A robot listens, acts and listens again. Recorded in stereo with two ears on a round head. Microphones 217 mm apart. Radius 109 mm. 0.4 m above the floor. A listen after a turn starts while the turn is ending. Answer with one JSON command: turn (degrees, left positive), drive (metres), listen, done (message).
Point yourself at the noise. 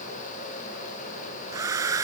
{"turn": -30}
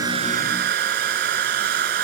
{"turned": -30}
{"turn": -135}
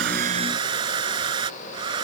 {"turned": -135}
{"turn": -20}
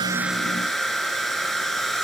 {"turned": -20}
{"done": "Facing the hair dryer."}